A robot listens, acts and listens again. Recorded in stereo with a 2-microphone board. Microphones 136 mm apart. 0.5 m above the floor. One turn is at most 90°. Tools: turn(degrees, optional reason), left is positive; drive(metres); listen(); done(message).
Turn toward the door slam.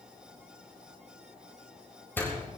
turn(degrees=30)
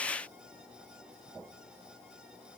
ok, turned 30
listen()
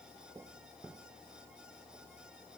done("I heard a door slam, but can't make it out now. It was about 15° right or 135° left.")